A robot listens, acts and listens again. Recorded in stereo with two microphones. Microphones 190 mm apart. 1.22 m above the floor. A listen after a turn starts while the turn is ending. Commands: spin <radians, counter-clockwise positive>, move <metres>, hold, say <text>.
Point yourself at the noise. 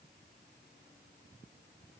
hold
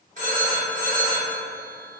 spin -0.70
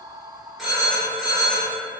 say Facing the phone ringing, 1 to 2 m away.